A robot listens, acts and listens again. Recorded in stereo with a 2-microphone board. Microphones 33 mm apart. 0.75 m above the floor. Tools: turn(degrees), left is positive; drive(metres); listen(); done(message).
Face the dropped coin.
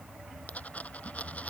turn(degrees=50)
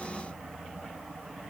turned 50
listen()
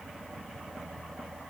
done("I heard a dropped coin, but can't make it out now. It was about straight ahead or 80° left.")